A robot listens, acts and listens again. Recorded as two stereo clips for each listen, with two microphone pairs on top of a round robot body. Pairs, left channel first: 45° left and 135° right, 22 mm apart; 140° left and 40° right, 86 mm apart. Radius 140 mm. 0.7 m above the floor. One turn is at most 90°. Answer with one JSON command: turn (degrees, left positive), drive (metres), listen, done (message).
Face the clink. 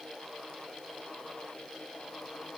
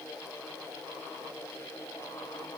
{"listen": true}
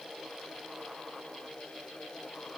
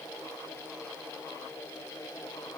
{"listen": true}
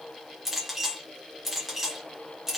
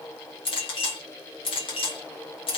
{"turn": 90}
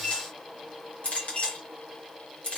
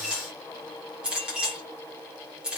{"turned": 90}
{"turn": 40}
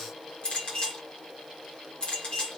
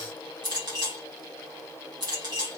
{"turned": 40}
{"done": "Found it: a clink, straight ahead."}